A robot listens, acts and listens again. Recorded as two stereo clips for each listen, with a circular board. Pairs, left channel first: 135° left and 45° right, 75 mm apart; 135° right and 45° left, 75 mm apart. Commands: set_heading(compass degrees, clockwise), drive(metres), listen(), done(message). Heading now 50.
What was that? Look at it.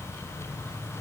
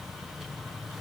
listen()
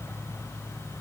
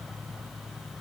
listen()
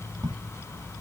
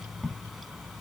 set_heading(100)
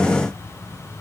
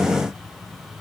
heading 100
done("I heard a crack from this way, but can't make it out now.")